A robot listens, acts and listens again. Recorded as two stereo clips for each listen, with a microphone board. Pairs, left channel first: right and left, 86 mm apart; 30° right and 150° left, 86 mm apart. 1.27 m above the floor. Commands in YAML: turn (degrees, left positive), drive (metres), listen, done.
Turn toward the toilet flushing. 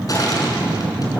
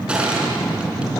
listen: true
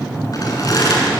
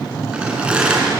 listen: true
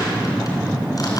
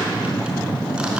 done: "I can't make out a toilet flushing to turn to."